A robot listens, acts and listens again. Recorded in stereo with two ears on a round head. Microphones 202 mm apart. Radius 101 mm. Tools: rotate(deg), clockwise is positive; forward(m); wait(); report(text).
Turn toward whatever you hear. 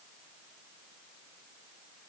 wait()
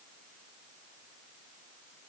wait()
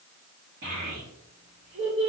rotate(25)
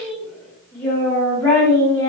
rotate(-20)
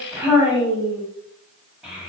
report("Facing the child speaking, 1 to 2 m away.")